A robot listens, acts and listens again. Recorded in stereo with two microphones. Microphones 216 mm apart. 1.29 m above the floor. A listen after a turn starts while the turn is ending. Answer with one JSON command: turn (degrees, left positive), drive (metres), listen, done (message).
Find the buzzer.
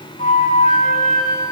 {"listen": true}
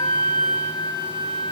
{"listen": true}
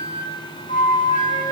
{"done": "I can't make out a buzzer to turn to."}